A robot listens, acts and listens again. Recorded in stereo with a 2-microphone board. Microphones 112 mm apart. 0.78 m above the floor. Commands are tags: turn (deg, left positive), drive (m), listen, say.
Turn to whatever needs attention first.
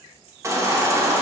<turn deg="-25"/>
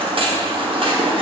<turn deg="-125"/>
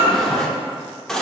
<say>Found it: a baby crying, straight ahead, under 1 m away.</say>